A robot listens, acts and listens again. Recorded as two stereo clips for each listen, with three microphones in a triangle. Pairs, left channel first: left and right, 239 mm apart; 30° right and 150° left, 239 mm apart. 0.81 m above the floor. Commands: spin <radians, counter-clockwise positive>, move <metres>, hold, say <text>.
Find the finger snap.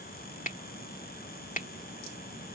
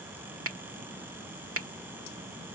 spin 2.53
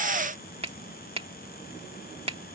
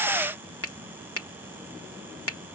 spin -0.44
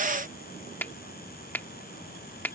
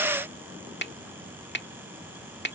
spin 0.17
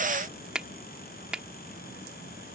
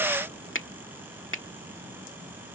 say Found it: a finger snap, straight ahead.